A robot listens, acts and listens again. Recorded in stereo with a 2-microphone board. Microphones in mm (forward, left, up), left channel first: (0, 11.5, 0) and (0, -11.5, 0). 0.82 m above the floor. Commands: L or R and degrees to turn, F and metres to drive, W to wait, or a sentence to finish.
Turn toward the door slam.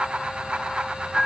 W
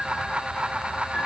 W
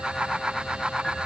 I can't make out a door slam, only a piano.